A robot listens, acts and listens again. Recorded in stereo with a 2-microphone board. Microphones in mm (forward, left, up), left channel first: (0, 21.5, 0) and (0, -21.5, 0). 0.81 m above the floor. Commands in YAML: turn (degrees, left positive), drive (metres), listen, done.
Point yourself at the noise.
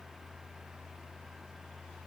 listen: true
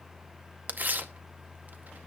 turn: -45
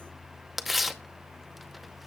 done: "Facing the tearing paper, under 1 m away."